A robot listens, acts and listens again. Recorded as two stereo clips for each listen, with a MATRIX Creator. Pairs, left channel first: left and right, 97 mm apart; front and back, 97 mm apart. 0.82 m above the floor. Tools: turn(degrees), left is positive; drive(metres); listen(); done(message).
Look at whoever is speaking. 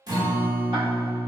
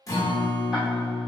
listen()
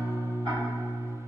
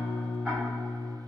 listen()
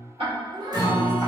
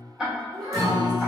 turn(degrees=-130)
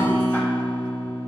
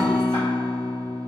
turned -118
turn(degrees=-15)
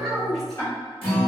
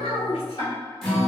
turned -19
done("Facing the child speaking.")